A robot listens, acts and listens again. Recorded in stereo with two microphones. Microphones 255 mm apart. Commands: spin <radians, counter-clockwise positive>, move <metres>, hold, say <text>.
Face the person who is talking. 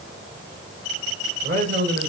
spin -0.61
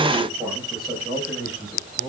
say Found it: a man speaking, straight ahead, over 4 m away.